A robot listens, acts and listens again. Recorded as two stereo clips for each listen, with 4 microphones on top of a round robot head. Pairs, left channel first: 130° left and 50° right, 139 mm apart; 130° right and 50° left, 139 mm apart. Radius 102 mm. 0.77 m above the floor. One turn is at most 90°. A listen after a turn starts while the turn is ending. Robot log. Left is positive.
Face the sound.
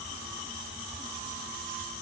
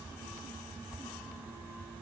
cmd idle
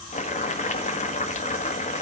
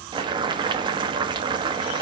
note: The boiling: 105° left.
cmd yaw +90
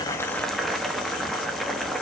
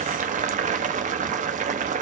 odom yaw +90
note: The boiling is now 40° left.
cmd yaw +40
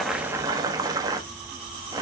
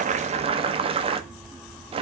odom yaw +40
note: The boiling is now 10° left.
cmd yaw +10
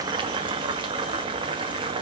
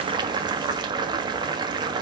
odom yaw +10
end: Facing the boiling.